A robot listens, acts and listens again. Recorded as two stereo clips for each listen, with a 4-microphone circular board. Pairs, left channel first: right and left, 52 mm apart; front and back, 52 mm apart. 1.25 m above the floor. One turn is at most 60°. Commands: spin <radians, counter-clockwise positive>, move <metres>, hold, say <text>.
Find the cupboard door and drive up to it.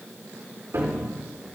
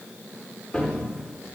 spin 1.05
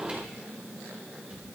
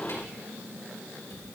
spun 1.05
spin 0.17
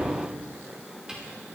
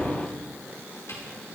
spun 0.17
spin 0.26
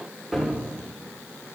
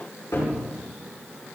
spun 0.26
move 1.0
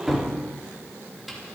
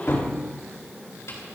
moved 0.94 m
move 1.0
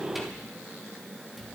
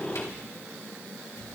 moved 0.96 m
hold
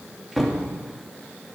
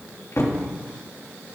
move 1.0
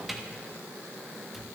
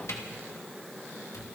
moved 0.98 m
move 1.0
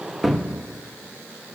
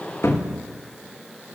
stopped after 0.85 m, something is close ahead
say I am next to the cupboard door.